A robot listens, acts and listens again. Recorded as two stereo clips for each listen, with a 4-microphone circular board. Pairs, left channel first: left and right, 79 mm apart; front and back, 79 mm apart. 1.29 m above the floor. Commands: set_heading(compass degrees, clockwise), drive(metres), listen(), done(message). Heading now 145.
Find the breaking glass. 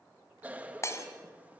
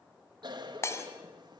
set_heading(100)
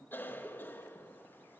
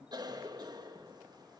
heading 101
done("I heard breaking glass from this way, but can't make it out now.")